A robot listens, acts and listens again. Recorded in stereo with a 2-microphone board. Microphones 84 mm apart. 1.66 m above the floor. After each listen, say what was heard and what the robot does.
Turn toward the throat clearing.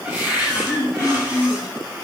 The throat clearing: about 35° left or 145° left. Turn 35° left.
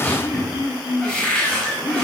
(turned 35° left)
So it is at 110° left. Turn 110° left.
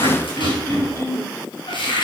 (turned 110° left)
The throat clearing is now 35° left. Turn 35° left.
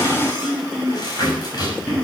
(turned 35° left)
Found it: throat clearing, straight ahead, 2 to 4 m away.